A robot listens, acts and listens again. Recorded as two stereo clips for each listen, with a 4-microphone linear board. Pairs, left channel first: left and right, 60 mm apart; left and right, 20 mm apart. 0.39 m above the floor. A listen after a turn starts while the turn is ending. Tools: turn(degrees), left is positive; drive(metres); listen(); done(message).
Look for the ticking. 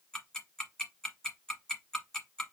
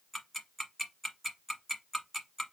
turn(degrees=30)
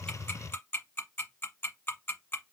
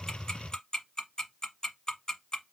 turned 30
turn(degrees=140)
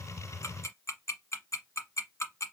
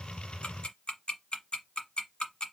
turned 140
turn(degrees=50)
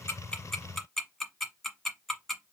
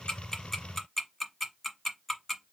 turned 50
done("Facing the ticking, 1 to 2 m away.")